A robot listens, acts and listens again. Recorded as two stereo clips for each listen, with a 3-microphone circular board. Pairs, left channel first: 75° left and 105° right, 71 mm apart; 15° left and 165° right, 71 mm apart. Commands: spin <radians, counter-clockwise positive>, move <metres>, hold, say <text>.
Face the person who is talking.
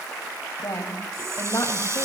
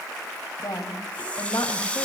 spin 0.61
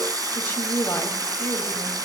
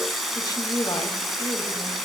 spin 0.26
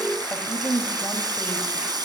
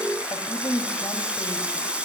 say Found it: a woman speaking, straight ahead, 2 to 4 m away.